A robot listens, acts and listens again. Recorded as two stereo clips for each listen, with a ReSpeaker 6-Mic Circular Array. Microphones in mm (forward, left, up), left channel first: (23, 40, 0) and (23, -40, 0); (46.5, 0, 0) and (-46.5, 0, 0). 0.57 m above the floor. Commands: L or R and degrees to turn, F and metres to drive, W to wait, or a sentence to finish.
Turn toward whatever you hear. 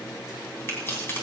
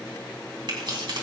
L150
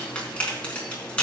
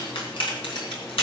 L15
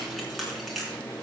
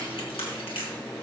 Found it: keys jangling, straight ahead.